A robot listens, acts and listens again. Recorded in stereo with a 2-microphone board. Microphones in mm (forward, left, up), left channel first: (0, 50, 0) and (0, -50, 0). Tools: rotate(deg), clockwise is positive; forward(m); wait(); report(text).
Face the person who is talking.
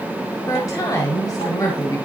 rotate(-35)
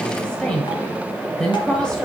rotate(-10)
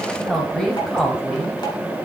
report("Found it: a woman speaking, straight ahead.")